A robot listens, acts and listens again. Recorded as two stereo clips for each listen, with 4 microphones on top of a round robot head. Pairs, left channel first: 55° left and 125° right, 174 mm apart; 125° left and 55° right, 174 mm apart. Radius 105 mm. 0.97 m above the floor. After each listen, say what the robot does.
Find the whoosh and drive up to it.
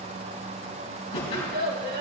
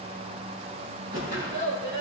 Drive 1.0 m forward.
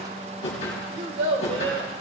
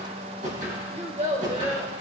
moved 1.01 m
Drive 1.0 m forward.
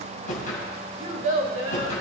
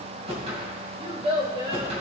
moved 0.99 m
Drive 1.0 m forward.
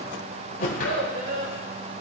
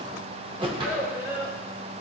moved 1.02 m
Drive 1.0 m forward.
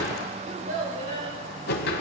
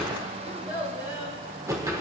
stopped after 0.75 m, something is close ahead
Turn 20° left.
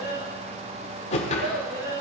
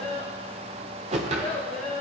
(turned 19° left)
Arrived at the whoosh, straight ahead.